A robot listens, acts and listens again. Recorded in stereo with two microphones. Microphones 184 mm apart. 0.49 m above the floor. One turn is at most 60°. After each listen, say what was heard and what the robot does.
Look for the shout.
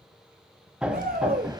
The shout: about 50° right or 130° right. Turn 50° right.
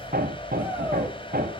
Keep listening.
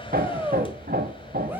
So it is at 10° right. Turn 10° right.
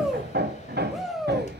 Found it: a shout, straight ahead.